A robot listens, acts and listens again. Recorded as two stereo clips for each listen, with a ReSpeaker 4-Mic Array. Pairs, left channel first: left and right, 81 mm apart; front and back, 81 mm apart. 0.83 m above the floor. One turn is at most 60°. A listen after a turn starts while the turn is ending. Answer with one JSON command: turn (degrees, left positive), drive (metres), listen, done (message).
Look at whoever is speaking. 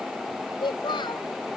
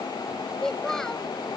{"turn": 60}
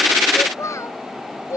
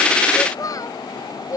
{"turn": 40}
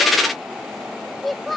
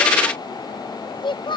{"done": "Facing the child speaking."}